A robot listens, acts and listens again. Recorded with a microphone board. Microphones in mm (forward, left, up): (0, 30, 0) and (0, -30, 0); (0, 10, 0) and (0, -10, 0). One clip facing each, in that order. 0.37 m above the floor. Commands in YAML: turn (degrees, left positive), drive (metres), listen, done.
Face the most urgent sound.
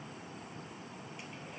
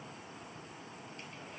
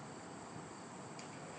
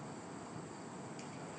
listen: true
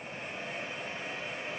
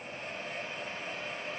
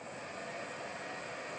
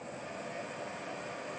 listen: true
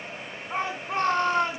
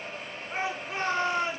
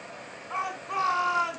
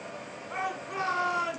turn: 60
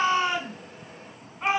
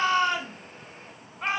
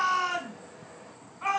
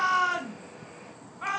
turn: 10
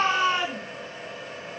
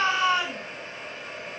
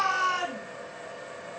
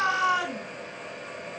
done: "Found it: a shout, straight ahead."